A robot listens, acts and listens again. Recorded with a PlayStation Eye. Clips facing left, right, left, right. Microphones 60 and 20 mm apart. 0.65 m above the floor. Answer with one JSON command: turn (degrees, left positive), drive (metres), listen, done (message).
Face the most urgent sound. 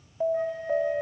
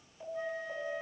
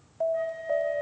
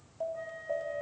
{"turn": 75}
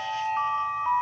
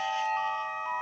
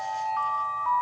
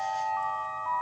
{"turn": 30}
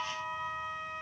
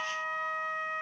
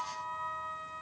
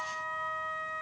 {"listen": true}
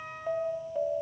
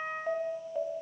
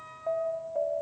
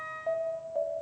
{"done": "Facing the alarm, 2 to 4 m away."}